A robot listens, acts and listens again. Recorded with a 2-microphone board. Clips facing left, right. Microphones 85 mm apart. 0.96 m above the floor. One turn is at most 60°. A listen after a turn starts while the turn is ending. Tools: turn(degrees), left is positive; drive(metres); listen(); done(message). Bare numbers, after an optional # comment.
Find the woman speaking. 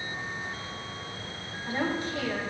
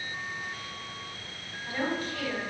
# The woman speaking: about 25° left or 155° left.
turn(25)
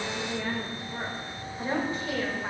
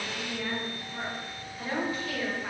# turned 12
# The woman speaking: about 25° left or 155° left.
turn(25)
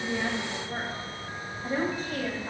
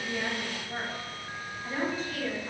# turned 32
# So it is at 130° left.
turn(60)
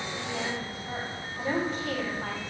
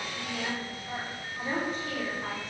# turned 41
# The woman speaking is now 85° left.
turn(60)
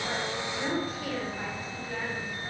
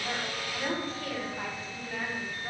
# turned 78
# The woman speaking is now 10° left.
turn(10)
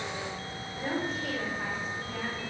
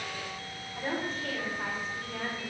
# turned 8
done("Found it: a woman speaking, straight ahead, over 4 m away.")